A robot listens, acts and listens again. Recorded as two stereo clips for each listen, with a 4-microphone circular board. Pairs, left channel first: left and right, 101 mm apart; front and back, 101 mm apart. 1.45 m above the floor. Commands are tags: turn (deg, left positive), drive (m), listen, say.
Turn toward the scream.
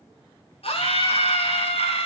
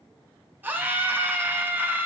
<turn deg="110"/>
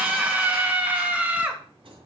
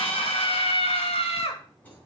<turn deg="-15"/>
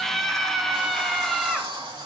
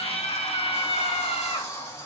<say>Found it: a scream, straight ahead.</say>